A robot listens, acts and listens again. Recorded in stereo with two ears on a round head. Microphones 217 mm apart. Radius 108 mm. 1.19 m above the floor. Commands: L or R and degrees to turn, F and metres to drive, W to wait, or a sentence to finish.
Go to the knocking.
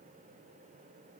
W
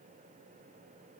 W
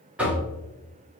R30
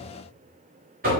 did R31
R140
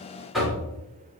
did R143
F1.0
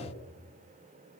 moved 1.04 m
W
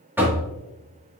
R10
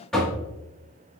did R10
F1.0
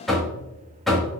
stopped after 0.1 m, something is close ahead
I am next to the knocking.